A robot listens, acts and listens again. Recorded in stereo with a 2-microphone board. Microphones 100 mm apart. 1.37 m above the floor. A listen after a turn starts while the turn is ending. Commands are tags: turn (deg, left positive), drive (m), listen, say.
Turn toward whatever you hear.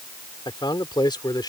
<turn deg="45"/>
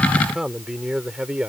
<turn deg="-10"/>
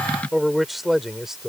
<say>Facing the man speaking.</say>